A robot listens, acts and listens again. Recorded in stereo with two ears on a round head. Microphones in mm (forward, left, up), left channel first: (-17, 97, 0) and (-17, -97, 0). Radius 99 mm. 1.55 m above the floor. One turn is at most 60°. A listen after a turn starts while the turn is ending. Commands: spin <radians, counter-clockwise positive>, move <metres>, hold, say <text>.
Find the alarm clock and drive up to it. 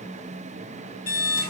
spin 0.52
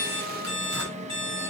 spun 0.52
spin -0.35
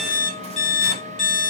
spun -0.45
move 1.0
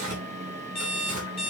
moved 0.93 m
move 1.0
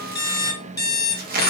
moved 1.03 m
spin 0.26
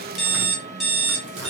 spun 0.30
move 1.0
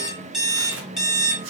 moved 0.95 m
move 1.0
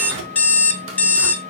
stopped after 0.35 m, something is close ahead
spin 0.17
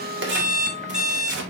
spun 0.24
say I am next to the alarm clock.